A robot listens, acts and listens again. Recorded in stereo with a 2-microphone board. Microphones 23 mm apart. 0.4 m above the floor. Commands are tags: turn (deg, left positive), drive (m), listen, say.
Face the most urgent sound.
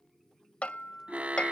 <turn deg="-70"/>
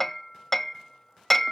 <listen/>
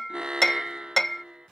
<turn deg="-40"/>
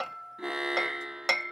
<turn deg="-25"/>
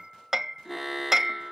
<turn deg="-10"/>
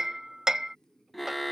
<say>Found it: an alarm, straight ahead.</say>